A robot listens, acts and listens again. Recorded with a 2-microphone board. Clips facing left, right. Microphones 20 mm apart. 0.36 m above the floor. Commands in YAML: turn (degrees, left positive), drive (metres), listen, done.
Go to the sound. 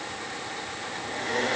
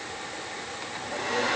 turn: -70
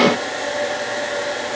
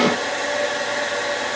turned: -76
turn: -25
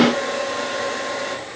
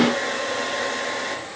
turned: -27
drive: 1.0
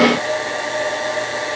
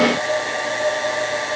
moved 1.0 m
drive: 1.0
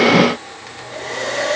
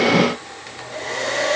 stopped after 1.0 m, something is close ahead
done: "I am next to the hair dryer."